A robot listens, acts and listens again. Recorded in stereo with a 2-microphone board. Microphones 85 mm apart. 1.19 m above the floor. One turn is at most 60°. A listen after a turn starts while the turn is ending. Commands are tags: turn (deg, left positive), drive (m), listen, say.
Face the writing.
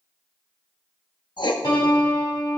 <turn deg="60"/>
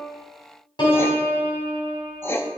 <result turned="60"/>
<turn deg="30"/>
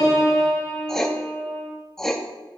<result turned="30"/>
<say>Facing the writing, under 1 m away.</say>